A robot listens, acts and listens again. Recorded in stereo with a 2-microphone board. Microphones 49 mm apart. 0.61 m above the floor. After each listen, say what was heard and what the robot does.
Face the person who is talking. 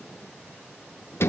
Keep listening.
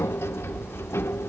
Keep listening.
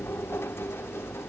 I can't make out anyone speaking to turn to.